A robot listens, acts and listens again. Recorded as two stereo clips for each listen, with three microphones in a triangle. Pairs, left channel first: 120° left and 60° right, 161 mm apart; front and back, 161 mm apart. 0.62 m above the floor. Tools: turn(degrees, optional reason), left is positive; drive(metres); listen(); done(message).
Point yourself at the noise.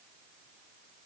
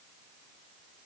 listen()
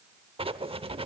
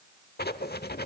done("Facing the writing.")